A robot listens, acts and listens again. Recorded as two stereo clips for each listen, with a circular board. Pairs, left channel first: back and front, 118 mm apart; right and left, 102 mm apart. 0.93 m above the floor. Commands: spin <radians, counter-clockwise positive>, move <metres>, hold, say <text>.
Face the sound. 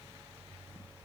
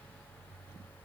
hold
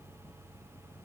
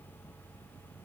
hold
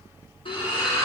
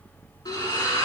spin -2.44
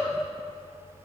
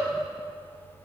say Facing where the splash came from. I can't hear it now.